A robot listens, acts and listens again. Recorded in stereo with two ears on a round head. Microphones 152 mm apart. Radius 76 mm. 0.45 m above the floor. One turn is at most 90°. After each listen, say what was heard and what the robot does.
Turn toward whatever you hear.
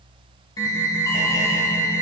The alarm: about 20° left or 160° left. Turn 20° left.
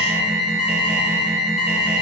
So it is at 140° left. Turn 90° left.
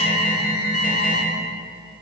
The alarm is now 60° left. Turn 60° left.
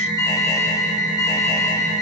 The alarm is now 25° left. Turn 25° left.
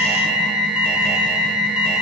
Found it: an alarm, straight ahead, 1 to 2 m away.